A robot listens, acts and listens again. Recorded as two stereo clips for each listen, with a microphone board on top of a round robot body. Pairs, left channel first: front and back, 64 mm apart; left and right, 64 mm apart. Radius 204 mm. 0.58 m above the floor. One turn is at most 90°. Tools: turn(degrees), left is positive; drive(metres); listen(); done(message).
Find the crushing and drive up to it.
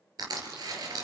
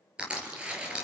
turn(degrees=-90)
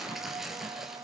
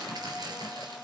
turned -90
turn(degrees=-90)
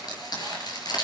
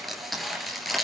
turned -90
drive(metres=1.0)
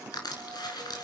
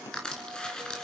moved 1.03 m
turn(degrees=15)
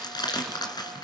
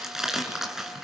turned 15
drive(metres=1.0)
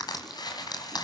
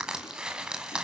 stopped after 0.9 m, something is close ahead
turn(degrees=-10)
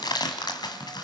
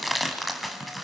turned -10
done("Arrived at the crushing, straight ahead.")